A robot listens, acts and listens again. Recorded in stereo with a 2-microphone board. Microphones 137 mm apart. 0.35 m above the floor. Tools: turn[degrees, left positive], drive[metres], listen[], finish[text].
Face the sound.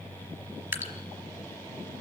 Thought: The dripping: about 20° right or 160° right.
Action: turn[-20]
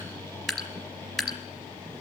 Action: finish[Facing the dripping.]